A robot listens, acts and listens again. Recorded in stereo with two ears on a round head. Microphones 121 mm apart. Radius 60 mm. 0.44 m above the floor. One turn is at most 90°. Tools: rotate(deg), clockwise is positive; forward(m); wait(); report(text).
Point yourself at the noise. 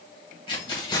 rotate(-30)
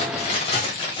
rotate(-35)
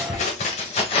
rotate(-90)
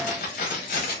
rotate(-70)
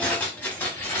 rotate(-15)
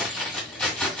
report("Facing the keys jangling.")